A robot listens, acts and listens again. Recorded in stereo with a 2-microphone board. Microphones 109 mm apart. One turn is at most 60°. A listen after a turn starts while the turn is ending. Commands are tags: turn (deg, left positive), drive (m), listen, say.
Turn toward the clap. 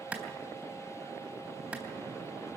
<turn deg="-30"/>
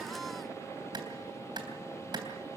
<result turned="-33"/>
<turn deg="-60"/>
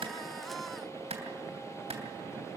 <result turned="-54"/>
<turn deg="-60"/>
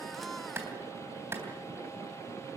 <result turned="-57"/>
<turn deg="-25"/>
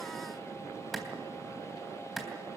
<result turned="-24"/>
<say>Found it: a clap, straight ahead, 2 to 4 m away.</say>